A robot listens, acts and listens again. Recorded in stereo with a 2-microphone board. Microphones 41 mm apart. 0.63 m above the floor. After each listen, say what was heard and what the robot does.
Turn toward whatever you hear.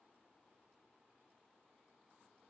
Keep listening.
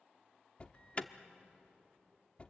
The alarm: about 30° left or 150° left. Turn 30° left.
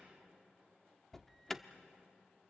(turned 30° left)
Facing the alarm, under 1 m away.